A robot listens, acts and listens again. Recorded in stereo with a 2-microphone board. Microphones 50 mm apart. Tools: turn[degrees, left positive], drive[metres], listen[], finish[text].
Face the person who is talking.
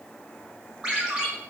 Action: listen[]
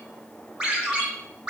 Action: listen[]
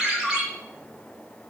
Action: finish[I can't make out anyone speaking to turn to.]